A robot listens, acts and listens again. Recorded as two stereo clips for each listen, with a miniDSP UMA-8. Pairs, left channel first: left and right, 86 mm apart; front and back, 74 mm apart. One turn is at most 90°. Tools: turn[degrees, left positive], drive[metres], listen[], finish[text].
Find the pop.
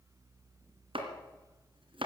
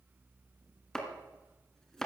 Action: listen[]
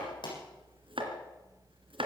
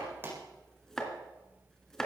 Thought: The pop: 120° left.
Action: turn[90]
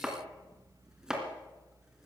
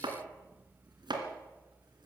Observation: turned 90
Thought: Nothing new. It was at 30° left.
Action: turn[30]
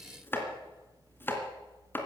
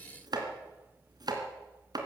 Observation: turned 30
Action: finish[Facing where the pop came from. I can't hear it now.]